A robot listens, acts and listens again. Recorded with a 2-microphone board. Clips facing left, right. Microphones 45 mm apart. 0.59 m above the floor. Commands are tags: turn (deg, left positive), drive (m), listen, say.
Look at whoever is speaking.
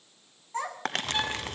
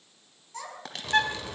<turn deg="35"/>
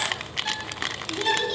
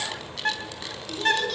<listen/>
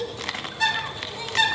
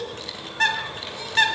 <turn deg="10"/>
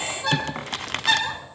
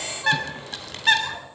<listen/>
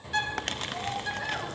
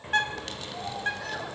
<listen/>
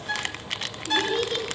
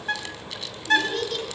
<turn deg="15"/>
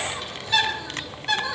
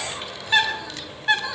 <listen/>
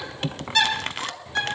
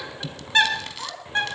<say>Facing the child speaking, over 4 m away.</say>